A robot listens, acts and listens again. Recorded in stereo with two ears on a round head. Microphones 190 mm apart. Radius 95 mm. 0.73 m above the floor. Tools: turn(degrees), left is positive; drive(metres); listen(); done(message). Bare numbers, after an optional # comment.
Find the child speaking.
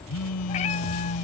listen()
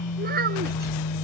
# The child speaking: about 45° right or 135° right.
turn(-45)
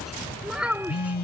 done("Found it: a child speaking, straight ahead.")